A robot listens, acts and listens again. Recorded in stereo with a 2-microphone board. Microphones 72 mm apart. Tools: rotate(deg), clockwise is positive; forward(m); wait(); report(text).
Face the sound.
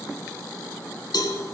rotate(-65)
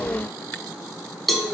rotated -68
report("Facing the cowbell, 1 to 2 m away.")